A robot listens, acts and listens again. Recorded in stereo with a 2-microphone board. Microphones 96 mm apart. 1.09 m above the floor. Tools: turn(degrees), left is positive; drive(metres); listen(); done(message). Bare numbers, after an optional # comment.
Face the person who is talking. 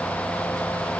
listen()
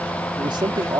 # The man speaking: about 50° right or 130° right.
turn(-50)
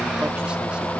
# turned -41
listen()
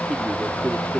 # So it is at 10° right.
turn(-10)
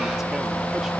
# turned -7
listen()
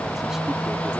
listen()
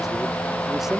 done("Facing where the man speaking came from. I can't hear it now.")